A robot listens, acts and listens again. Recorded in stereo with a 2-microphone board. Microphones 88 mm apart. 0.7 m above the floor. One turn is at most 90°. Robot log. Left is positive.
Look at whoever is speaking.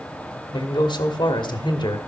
note: The man speaking: about 65° left or 115° left.
cmd yaw +65
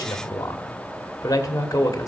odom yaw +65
note: So it is at 45° left.
cmd yaw +45
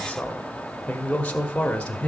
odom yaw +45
note: The man speaking is now 15° left.
cmd yaw +15
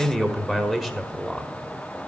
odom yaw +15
end: Facing the man speaking, 1 to 2 m away.